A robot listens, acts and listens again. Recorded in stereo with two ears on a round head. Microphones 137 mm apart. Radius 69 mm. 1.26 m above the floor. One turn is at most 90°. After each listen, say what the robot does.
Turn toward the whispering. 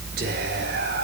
Turn 65° right.
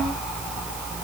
Keep listening.
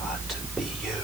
Found it: whispering, straight ahead.